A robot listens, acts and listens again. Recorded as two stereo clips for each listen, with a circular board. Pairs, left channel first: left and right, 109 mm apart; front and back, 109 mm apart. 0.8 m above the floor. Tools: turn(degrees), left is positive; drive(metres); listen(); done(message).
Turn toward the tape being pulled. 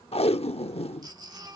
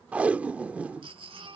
turn(degrees=105)
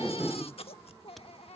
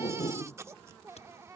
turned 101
done("Found it: tape being pulled, straight ahead.")